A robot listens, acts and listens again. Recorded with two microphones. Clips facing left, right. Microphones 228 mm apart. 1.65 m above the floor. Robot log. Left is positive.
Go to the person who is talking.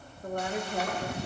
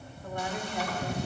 note: The woman speaking: about 55° left or 125° left.
cmd yaw +55
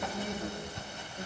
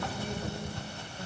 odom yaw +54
note: So it is at 70° left.
cmd yaw +70
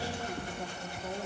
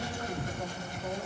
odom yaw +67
cmd fwd 1.0
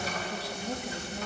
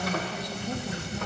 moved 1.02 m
cmd fwd 1.0
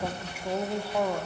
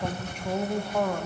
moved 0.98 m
note: The woman speaking is now 10° left.
cmd yaw +10
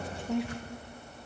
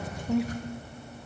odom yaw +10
cmd fwd 1.0
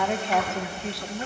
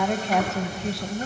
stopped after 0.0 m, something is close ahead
end: Arrived at the woman speaking, straight ahead.